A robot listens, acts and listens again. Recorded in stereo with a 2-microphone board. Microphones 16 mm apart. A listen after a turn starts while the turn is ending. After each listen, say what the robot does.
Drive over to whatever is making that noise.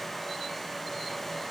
Keep listening.
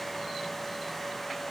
Keep listening.
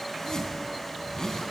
Turn 40° left.
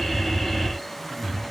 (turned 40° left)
Drive 1.0 m forward.
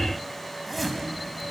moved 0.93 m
Turn 10° right.
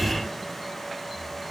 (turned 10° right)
Keep listening.
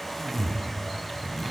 Drive 1.0 m forward.
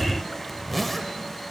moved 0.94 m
Drive 1.0 m forward.
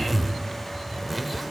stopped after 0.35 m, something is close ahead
Arrived at the zipper, straight ahead.